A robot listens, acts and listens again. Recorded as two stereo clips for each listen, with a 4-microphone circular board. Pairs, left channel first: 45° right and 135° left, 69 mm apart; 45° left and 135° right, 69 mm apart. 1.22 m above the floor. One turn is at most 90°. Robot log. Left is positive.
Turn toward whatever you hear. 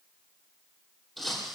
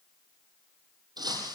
note: The breaking glass: 140° right.
cmd yaw -90
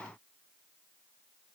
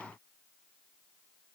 note: Nothing new. It was at 50° right.
cmd yaw -50
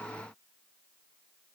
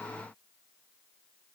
end: I heard breaking glass from this way, but can't make it out now.